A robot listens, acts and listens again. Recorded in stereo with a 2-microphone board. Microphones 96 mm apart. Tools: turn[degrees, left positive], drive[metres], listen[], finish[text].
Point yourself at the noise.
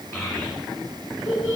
Thought: The child speaking: about 35° left or 145° left.
Action: turn[35]
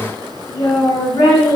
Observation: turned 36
Thought: So it is at 105° left.
Action: turn[105]
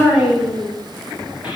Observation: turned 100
Thought: The child speaking is now 10° right.
Action: turn[-10]
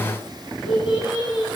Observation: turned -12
Action: finish[Facing the child speaking, over 4 m away.]